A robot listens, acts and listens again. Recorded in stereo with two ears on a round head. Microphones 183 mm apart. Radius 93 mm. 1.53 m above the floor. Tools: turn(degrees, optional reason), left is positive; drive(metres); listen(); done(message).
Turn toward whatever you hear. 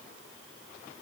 listen()
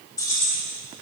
turn(degrees=30)
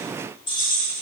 turn(degrees=20, reason="The keys jangling: about 20° left or 160° left.")
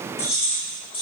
turn(degrees=25, reason="The keys jangling: about 25° left or 155° left.")
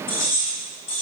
turn(degrees=140, reason="So it is at 140° left.")
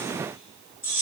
turn(degrees=-10, reason="The keys jangling is now 10° right.")
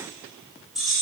done("Facing the keys jangling.")